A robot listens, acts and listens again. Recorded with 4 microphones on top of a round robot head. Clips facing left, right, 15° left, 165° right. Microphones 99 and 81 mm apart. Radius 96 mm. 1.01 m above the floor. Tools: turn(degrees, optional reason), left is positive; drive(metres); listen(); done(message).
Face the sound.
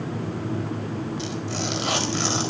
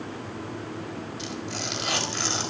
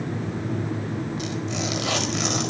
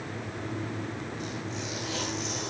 turn(degrees=30, reason="The tearing paper: 30° left.")
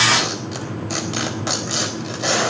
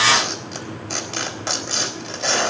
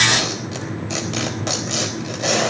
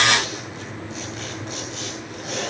turn(degrees=10, reason="The tearing paper is now 10° left.")
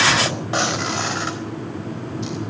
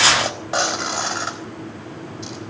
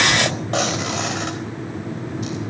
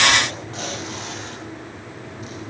done("Facing the tearing paper.")